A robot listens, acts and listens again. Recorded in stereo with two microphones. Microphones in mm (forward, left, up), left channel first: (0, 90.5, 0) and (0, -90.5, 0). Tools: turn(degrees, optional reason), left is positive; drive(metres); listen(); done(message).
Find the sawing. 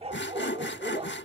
turn(degrees=90)
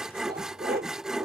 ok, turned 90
done("Facing the sawing.")